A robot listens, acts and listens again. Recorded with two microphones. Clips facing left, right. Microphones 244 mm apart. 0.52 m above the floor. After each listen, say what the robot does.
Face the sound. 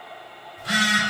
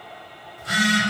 Turn 75° left.
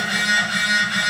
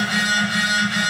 Turn 30° left.
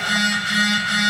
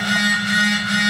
Facing the phone buzzing, under 1 m away.